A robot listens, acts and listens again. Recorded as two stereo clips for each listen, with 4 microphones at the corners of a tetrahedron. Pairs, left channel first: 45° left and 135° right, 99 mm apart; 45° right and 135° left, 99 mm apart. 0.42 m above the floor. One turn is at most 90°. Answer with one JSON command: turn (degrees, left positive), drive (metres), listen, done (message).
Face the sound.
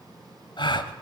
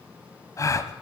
{"turn": 10}
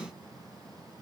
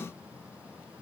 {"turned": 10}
{"done": "I heard a gasp from this way, but can't make it out now."}